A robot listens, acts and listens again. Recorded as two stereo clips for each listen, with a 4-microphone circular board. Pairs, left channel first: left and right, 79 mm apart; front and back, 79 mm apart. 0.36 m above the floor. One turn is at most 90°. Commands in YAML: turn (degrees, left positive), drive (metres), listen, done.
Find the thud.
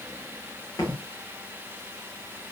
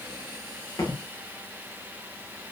turn: 45
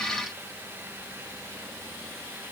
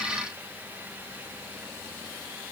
done: "Facing where the thud came from. I can't hear it now."